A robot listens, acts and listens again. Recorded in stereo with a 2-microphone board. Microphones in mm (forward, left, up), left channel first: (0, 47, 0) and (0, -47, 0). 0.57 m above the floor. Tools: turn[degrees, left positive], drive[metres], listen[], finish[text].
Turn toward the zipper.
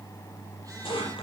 Thought: The zipper: about 70° left or 110° left.
Action: turn[70]
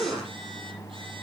Action: finish[Found it: a zipper, straight ahead.]